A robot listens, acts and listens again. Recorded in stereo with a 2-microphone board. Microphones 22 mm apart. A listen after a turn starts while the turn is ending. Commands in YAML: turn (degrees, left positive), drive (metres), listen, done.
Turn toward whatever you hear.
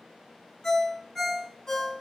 turn: 30
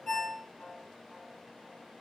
turn: 120
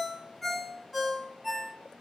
turn: -10
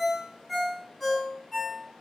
done: "Facing the ringtone, 1 to 2 m away."